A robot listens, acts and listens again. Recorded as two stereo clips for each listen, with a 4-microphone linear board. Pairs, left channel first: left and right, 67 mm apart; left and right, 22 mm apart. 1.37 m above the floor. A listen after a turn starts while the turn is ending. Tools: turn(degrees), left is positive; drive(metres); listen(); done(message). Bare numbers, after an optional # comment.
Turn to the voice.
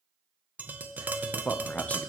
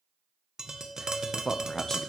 # The man speaking: about 25° left or 155° left.
turn(25)
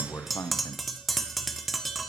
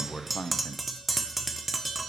# So it is at 130° left.
turn(130)
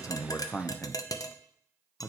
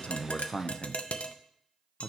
# The man speaking is now 25° left.
turn(25)
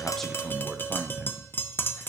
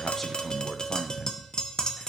# The man speaking is now 15° right.
turn(-15)
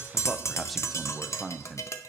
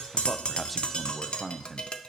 done("Found it: a man speaking, straight ahead, under 1 m away.")